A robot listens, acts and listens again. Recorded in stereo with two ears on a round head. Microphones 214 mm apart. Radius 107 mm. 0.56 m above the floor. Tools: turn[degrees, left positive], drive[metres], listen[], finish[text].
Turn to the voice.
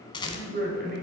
Thought: The man speaking: about 45° right or 135° right.
Action: turn[-45]
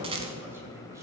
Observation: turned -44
Thought: So it is at 10° right.
Action: turn[-10]
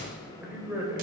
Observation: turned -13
Thought: The man speaking is now 10° right.
Action: turn[-10]
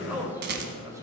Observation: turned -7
Thought: The man speaking is now 15° right.
Action: turn[-15]
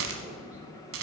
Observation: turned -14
Action: listen[]
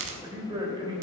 Thought: The man speaking is now 20° right.
Action: turn[-20]
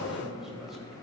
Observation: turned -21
Action: finish[Facing the man speaking, 2 to 4 m away.]